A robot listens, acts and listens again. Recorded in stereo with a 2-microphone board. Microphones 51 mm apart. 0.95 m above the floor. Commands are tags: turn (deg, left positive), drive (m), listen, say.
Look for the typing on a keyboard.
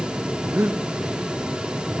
<listen/>
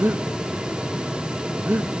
<listen/>
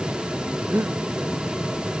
<say>I can't make out typing on a keyboard to turn to.</say>